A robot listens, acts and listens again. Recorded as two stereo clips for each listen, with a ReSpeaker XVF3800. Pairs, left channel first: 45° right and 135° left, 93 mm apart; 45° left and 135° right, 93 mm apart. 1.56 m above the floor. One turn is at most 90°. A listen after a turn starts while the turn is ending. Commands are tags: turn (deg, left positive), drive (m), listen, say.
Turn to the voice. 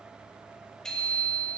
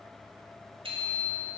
<listen/>
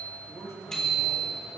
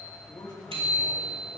<turn deg="10"/>
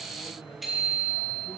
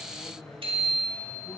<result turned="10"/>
<say>Found it: a man speaking, straight ahead, 2 to 4 m away.</say>